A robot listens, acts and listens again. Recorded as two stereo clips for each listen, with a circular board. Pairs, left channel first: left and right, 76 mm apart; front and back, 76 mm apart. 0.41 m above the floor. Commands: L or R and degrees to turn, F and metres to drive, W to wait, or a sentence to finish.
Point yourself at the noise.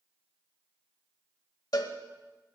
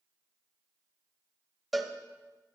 L90
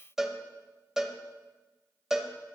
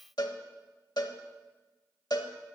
Found it: a cowbell, straight ahead, under 1 m away.